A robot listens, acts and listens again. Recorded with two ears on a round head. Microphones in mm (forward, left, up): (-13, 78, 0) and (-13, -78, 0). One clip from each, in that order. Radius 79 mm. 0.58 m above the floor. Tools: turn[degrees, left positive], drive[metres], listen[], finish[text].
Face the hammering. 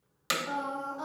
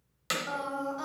Action: turn[30]
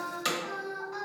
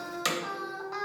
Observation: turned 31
Thought: So it is at 20° right.
Action: turn[-20]
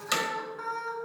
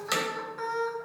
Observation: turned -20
Action: finish[Facing the hammering.]